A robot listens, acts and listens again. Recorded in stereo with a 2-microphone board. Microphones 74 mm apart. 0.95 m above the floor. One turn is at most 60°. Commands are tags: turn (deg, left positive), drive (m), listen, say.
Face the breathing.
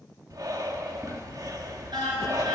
<turn deg="-60"/>
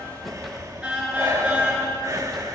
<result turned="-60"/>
<turn deg="-55"/>
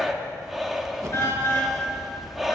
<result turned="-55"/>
<say>Found it: breathing, straight ahead, 1 to 2 m away.</say>